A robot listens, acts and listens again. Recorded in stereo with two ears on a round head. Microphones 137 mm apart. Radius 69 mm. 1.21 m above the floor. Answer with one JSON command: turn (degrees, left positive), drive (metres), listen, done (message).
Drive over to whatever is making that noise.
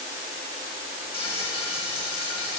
{"turn": 35}
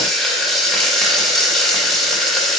{"drive": 1.0}
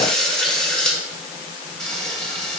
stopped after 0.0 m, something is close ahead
{"done": "Blocked. The frying is further on, straight ahead."}